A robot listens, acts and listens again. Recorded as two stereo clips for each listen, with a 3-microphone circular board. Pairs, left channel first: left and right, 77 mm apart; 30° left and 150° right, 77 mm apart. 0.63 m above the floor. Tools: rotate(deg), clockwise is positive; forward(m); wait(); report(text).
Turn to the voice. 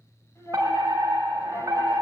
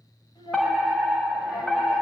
rotate(-40)
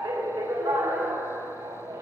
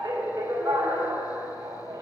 wait()
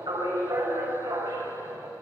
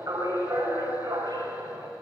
wait()
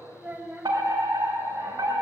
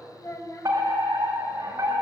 rotate(20)
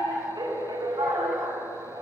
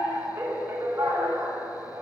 wait()
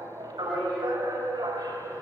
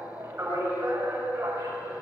wait()
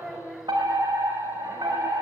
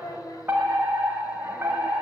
report("Facing the child speaking, 2 to 4 m away.")